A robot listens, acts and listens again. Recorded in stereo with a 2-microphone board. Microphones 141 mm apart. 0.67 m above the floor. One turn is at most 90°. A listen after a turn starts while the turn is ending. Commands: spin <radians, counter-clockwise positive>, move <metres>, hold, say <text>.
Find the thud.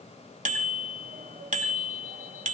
hold
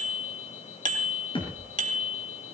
spin 0.70
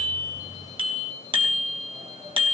hold
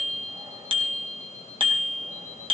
say I heard a thud, but can't make it out now. It was about straight ahead or 100° left.